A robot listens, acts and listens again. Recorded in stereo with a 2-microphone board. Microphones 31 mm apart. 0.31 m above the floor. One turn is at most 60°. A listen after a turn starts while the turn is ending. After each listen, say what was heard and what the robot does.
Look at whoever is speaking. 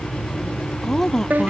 Turn 30° left.
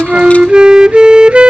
Keep listening.
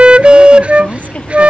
So it is at 140° left. Turn 60° left.
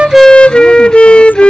Nothing new. It was at 80° left. Turn 60° left.
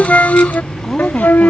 The woman speaking is now 10° left. Turn 10° left.
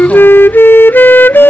Keep listening.
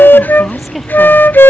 Found it: a woman speaking, straight ahead.